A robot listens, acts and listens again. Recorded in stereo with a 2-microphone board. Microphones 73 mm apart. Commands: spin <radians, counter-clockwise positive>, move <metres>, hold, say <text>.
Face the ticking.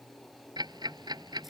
spin -1.22
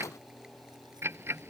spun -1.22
spin -0.61
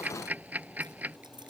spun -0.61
spin -0.44
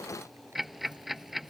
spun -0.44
say Found it: ticking, straight ahead.